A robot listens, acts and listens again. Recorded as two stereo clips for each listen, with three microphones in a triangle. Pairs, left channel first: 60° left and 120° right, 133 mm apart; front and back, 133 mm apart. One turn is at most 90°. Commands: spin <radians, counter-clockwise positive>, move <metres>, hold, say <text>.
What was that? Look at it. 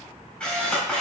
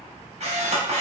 spin 1.57
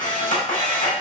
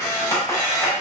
spin 1.22
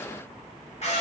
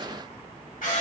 spin 0.35
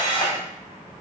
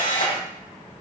say Facing the camera shutter.